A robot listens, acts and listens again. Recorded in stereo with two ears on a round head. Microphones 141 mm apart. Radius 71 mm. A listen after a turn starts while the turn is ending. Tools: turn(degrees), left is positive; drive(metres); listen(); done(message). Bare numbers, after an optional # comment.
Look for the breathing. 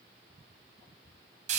listen()
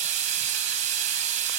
listen()
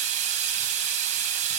done("I can't make out breathing to turn to.")